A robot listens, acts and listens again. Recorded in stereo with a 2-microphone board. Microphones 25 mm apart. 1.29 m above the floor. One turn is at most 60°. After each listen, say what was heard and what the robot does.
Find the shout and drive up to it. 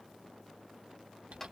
Keep listening.
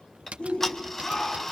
The shout: about 55° left or 125° left. Turn 55° left.
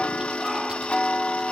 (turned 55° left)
Keep listening.
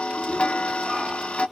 Keep listening.
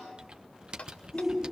Drive 1.0 m forward.
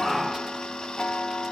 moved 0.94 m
Drive 1.0 m forward.
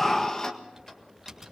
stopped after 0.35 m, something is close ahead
I am next to the shout.